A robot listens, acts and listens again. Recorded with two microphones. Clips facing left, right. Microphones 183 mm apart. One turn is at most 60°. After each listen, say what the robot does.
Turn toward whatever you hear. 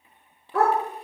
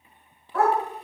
Turn 60° left.
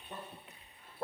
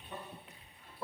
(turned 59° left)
Turn 50° left.
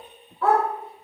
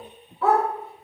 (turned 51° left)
Facing the dog barking.